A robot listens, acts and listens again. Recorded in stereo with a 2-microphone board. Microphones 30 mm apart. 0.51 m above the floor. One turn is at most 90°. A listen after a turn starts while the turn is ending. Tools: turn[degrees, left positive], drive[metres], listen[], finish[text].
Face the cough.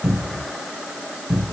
Action: listen[]
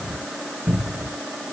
Action: listen[]
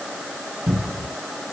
Action: finish[I can't make out a cough, only a cupboard door.]